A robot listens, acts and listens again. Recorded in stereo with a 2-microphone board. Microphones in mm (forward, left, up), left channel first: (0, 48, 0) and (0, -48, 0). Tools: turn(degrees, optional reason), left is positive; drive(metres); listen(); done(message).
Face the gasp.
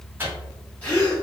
turn(degrees=30)
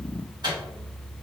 listen()
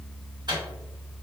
done("I heard a gasp, but can't make it out now. It was about 15° right or 135° left.")